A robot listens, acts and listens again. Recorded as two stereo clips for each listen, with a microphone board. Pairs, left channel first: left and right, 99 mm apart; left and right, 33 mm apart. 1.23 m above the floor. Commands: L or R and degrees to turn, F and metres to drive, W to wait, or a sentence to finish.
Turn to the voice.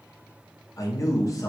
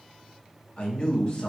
L35
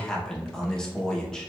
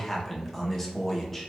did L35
L10
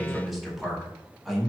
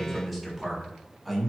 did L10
Found it: a man speaking, straight ahead, under 1 m away.